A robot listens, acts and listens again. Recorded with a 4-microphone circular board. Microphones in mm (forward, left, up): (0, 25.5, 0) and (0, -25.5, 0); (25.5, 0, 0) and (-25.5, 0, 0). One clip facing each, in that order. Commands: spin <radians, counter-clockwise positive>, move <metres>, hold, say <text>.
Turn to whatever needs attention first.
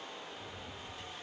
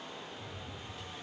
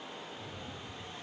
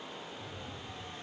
hold
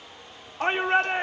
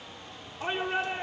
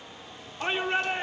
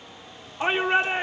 spin 2.01
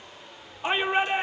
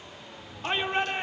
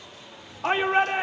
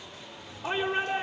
spin 0.26
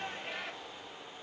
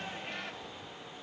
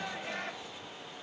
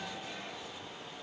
say Facing the shout.